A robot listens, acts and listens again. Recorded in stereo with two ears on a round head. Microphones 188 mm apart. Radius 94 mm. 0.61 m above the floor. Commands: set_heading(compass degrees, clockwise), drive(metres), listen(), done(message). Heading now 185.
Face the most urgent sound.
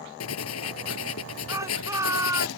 set_heading(200)
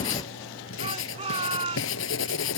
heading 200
set_heading(350)
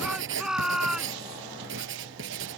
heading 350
done("Facing the shout.")